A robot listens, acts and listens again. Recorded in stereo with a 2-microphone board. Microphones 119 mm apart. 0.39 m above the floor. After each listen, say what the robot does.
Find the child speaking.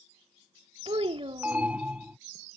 Turn 50° right.
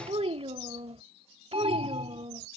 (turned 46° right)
Turn 75° right.
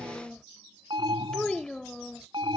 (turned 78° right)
Facing the child speaking.